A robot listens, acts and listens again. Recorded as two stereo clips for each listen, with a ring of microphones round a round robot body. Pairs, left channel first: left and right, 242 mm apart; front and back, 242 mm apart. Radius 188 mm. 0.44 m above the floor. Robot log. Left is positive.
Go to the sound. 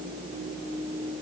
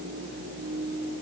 cmd idle
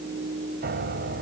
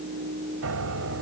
note: The piano: 145° right.
cmd yaw -145
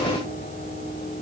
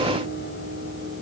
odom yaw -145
note: The piano is now 35° left.
cmd yaw +35
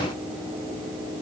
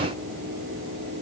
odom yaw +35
cmd idle
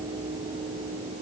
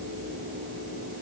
cmd idle
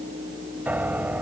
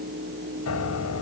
cmd fwd 1.0
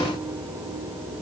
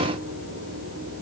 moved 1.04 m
note: The piano is now 10° right.
cmd yaw -10
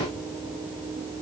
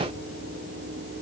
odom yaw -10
cmd idle
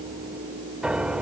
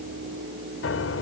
cmd fwd 1.0
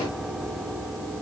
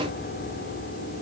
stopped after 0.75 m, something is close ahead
end: I am next to the piano.